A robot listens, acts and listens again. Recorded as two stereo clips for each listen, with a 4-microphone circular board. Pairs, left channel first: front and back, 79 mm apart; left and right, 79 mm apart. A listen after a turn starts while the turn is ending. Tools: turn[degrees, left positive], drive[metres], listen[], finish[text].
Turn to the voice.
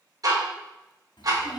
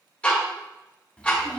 Thought: The child speaking: 15° left.
Action: turn[15]
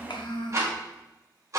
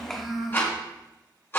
Action: finish[Facing the child speaking, under 1 m away.]